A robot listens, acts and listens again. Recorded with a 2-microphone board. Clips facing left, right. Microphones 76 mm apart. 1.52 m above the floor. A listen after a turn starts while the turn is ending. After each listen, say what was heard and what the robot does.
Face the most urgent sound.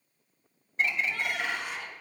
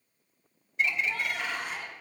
The shout: about 45° right or 135° right. Turn 45° right.
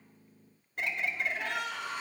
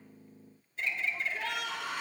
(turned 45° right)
So it is at 90° right. Turn 90° right.
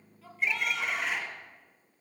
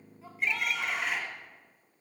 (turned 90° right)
Found it: a shout, straight ahead, 2 to 4 m away.